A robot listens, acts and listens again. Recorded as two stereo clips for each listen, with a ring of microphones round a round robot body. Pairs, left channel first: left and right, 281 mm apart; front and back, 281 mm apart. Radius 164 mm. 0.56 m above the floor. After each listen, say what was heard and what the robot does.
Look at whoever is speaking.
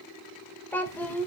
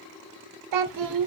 The child speaking: 175° left. Turn 175° left.
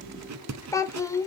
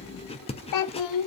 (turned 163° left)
The child speaking is now 10° left. Turn 10° left.
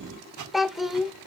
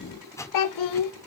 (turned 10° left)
Found it: a child speaking, straight ahead, 1 to 2 m away.